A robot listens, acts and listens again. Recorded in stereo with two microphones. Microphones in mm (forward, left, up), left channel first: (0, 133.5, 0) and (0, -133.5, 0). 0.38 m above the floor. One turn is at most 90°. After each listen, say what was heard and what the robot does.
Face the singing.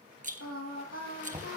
The singing: about 60° left or 120° left. Turn 60° left.
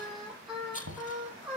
Facing the singing.